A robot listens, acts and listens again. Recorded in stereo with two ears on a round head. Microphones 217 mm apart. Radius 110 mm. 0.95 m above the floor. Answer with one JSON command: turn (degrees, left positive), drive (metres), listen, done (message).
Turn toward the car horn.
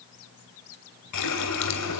{"listen": true}
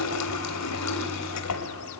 {"listen": true}
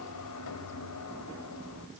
{"done": "I can't make out a car horn to turn to."}